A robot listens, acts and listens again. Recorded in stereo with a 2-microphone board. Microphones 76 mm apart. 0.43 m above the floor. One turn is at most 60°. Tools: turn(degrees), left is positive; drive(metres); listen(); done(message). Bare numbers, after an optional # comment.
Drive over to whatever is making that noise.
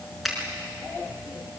turn(30)
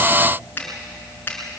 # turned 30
# So it is at 150° left.
turn(60)
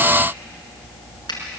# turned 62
# The finger snap is now 90° left.
turn(60)
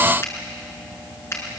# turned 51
# The finger snap is now 40° left.
turn(40)
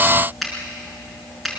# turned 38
drive(1.0)
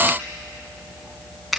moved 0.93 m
drive(1.0)
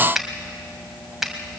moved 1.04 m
drive(1.0)
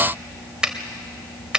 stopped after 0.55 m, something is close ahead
# The finger snap is now 15° right.
turn(-15)
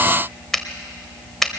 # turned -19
done("I am next to the finger snap.")